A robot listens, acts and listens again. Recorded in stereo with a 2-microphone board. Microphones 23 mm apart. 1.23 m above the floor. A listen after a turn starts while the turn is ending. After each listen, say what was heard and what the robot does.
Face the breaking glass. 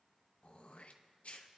Keep listening.
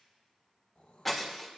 Turn 30° left.
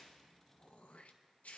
Keep listening.
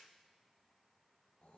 I heard breaking glass, but can't make it out now. It was about 25° right or 145° left.